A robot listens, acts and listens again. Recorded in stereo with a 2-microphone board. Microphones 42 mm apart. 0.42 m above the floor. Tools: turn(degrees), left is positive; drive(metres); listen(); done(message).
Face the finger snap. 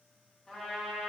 listen()
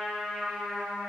listen()
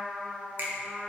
turn(degrees=-55)
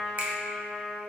turn(degrees=-55)
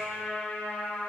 listen()
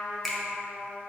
done("Facing the finger snap.")